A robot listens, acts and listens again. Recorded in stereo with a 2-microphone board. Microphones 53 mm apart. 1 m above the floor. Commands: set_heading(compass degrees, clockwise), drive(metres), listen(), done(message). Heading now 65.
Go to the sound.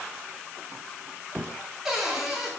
set_heading(95)
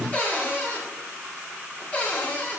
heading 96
set_heading(66)
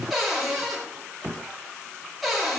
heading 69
drive(1.0)
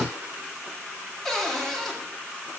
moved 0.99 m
set_heading(59)
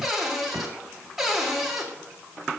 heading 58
drive(1.0)
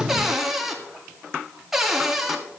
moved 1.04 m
drive(1.0)
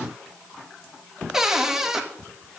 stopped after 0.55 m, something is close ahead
set_heading(68)
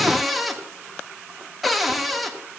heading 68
done("Arrived at the cupboard door, straight ahead.")